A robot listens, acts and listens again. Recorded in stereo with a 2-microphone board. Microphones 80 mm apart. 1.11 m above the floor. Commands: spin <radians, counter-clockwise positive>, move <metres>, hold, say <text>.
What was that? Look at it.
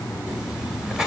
spin -0.52
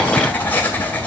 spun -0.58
spin 0.44
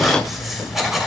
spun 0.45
say Facing the writing.